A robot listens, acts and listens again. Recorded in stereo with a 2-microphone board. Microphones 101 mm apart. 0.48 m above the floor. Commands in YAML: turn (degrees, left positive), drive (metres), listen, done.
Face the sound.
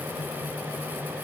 listen: true
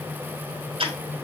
turn: -70
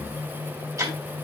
turn: -35
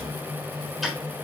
done: "Facing the ticking, 2 to 4 m away."